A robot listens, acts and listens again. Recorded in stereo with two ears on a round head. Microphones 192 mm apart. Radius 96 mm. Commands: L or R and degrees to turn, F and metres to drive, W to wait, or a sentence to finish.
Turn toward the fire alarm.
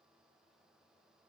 W
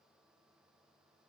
W
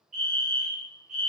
R35
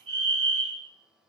R110
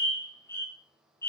L15
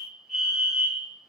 Found it: a fire alarm, straight ahead, over 4 m away.